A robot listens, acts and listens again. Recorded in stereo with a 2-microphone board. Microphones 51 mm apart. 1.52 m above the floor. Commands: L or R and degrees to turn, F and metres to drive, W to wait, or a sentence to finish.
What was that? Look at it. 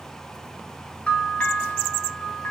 L25
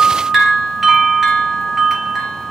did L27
Facing the bell.